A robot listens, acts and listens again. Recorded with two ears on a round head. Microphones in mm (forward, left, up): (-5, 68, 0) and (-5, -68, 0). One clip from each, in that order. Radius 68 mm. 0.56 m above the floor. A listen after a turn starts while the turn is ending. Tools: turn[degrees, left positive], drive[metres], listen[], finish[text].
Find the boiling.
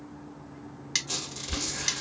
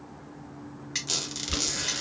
Thought: The boiling: about 20° right or 160° right.
Action: turn[-20]
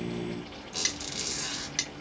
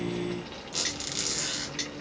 Thought: So it is at 140° right.
Action: turn[-140]
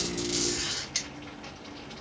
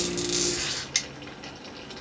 Thought: The boiling is now 50° right.
Action: turn[-50]
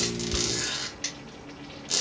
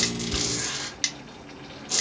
Action: finish[Found it: boiling, straight ahead.]